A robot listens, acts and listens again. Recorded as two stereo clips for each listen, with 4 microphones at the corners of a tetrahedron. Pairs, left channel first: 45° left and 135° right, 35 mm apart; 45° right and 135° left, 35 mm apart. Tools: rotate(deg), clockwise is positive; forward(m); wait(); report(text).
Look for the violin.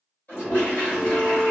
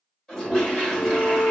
rotate(15)
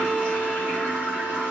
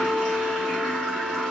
report("Facing the violin.")